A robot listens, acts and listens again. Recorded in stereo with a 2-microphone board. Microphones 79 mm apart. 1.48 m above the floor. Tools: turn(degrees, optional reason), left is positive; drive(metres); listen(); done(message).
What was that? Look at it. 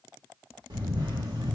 turn(degrees=-70, reason="The camera shutter: about 70° right or 110° right.")
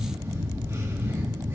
turn(degrees=-40, reason="So it is at 40° right.")
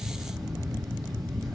done("Facing the camera shutter, 2 to 4 m away.")